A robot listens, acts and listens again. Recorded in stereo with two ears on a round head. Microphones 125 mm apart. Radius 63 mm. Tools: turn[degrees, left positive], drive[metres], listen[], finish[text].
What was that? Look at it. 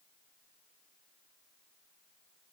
Action: listen[]
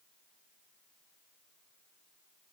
Action: listen[]
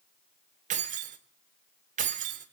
Thought: The keys jangling: about 60° right or 120° right.
Action: turn[-60]
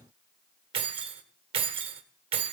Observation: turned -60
Thought: So it is at 40° right.
Action: turn[-40]
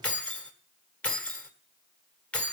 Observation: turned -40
Thought: The keys jangling is now 10° left.
Action: turn[10]
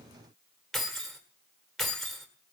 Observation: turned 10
Action: finish[Found it: keys jangling, straight ahead, 1 to 2 m away.]